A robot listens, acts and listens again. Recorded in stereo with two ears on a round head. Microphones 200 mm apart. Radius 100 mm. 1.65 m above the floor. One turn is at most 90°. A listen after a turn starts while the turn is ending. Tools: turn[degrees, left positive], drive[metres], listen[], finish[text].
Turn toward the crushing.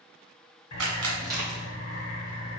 Thought: The crushing: about 15° right or 165° right.
Action: turn[-15]
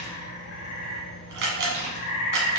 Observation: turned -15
Action: listen[]
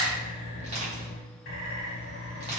Thought: So it is at 150° right.
Action: turn[-90]
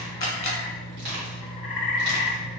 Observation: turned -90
Thought: The crushing is now 55° right.
Action: turn[-55]
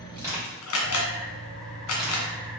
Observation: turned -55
Action: finish[Facing the crushing, 1 to 2 m away.]